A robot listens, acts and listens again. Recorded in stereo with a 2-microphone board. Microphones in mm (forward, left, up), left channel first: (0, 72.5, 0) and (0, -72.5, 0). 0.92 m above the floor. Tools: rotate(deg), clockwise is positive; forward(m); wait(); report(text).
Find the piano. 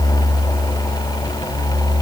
wait()
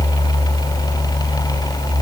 wait()
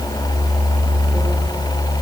report("I can't make out a piano.")